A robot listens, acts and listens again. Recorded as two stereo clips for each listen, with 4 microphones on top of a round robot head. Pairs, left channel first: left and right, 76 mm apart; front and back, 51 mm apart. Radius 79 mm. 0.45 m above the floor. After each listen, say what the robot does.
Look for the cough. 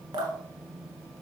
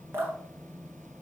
Keep listening.
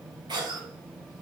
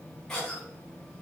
Turn 80° right.
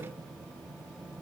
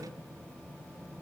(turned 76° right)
Keep listening.
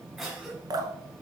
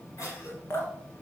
Facing the cough.